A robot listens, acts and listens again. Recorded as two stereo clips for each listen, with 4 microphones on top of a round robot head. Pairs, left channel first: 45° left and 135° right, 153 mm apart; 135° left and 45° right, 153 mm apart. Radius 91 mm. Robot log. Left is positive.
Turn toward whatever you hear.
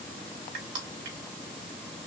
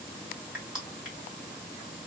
note: The crushing: 125° right.
cmd yaw -125
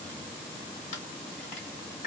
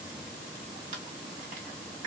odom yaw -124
end: Found it: crushing, straight ahead.